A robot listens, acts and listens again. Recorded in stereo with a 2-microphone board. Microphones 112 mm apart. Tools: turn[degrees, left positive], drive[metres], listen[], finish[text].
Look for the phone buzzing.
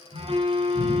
Thought: The phone buzzing: about 45° right or 135° right.
Action: turn[-45]
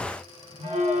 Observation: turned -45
Thought: So it is at 85° right.
Action: turn[-85]
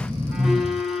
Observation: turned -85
Action: finish[Found it: a phone buzzing, straight ahead.]